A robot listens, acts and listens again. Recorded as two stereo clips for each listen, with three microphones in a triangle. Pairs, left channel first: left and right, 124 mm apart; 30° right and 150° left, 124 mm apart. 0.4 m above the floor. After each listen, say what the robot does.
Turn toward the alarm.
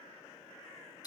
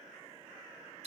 Keep listening.
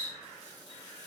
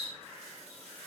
Keep listening.
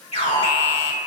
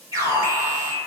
Turn 95° left.
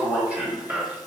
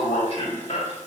Turn 10° right.
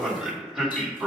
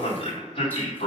Facing the alarm.